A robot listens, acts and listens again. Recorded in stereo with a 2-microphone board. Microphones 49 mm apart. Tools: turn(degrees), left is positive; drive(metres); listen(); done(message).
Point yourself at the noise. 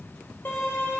turn(degrees=50)
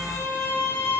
turn(degrees=80)
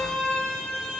turn(degrees=10)
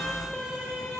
done("Facing the violin.")